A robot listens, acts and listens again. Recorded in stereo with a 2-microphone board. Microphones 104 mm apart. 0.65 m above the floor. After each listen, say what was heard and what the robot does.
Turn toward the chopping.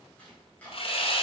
Turn 30° left.
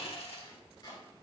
So it is at 135° left. Turn 135° left.
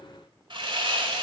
Keep listening.
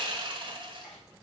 Found it: chopping, straight ahead.